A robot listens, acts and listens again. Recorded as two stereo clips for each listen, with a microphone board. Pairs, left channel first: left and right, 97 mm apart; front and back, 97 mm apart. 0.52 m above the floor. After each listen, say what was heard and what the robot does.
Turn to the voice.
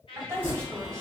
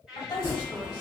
The woman speaking: 30° right. Turn 30° right.
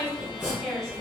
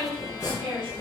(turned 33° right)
Facing the woman speaking.